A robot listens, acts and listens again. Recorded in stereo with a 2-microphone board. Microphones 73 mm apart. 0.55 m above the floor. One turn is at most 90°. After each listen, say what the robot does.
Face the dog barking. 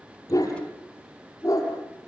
Turn 50° left.
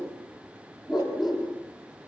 Facing the dog barking, over 4 m away.